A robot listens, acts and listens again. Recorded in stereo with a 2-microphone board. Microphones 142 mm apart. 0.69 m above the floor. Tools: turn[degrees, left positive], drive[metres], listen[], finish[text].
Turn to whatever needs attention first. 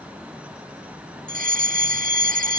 Action: turn[-90]
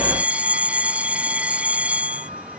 Thought: So it is at 10° right.
Action: turn[-10]
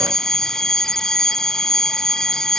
Action: finish[Found it: a fire alarm, straight ahead.]